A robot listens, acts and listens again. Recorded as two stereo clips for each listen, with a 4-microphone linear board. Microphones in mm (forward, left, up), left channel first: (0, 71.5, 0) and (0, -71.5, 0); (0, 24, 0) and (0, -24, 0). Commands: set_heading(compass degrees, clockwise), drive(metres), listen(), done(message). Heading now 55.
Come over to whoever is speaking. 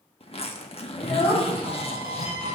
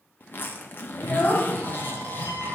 set_heading(25)
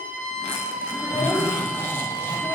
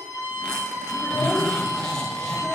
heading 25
set_heading(45)
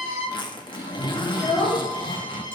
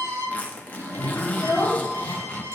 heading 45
drive(1.0)
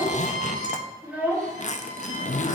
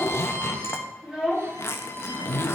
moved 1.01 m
set_heading(55)
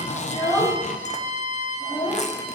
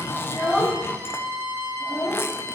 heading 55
drive(1.0)
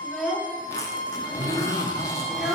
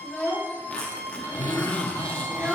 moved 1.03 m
drive(1.0)
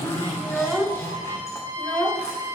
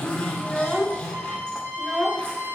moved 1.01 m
drive(1.0)
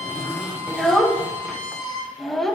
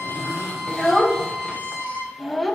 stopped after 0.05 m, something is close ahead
done("I am next to the child speaking.")